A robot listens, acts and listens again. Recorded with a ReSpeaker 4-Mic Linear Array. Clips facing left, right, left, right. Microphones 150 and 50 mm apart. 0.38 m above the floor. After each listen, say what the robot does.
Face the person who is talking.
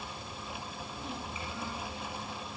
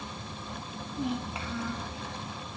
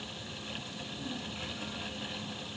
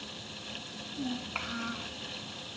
Turn 70° right.
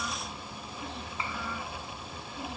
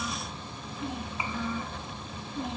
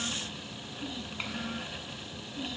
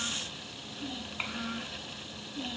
Turn 20° right.
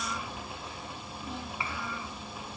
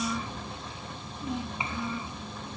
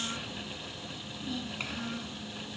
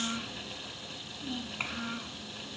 Turn 20° right.
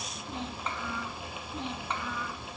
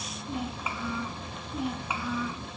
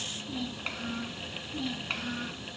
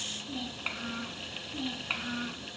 Found it: a child speaking, straight ahead, 2 to 4 m away.